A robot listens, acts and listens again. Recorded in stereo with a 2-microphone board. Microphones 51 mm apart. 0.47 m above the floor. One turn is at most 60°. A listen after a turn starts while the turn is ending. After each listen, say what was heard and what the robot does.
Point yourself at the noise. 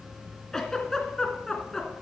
Turn 30° left.
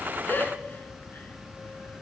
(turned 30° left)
So it is at 140° left. Turn 60° left.
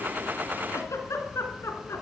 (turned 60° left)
The giggle is now 75° left. Turn 60° left.
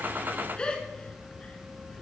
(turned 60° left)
The giggle is now 20° left. Turn 20° left.
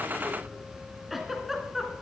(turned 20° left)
Facing the giggle, 2 to 4 m away.